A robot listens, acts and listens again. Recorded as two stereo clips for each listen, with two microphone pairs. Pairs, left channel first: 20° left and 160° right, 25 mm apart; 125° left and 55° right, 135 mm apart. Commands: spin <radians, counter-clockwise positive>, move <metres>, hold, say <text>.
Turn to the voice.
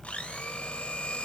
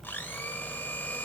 hold
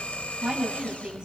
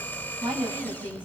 spin -1.92
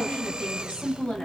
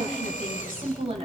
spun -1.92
spin -0.26
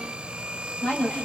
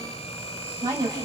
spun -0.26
say Facing the woman speaking.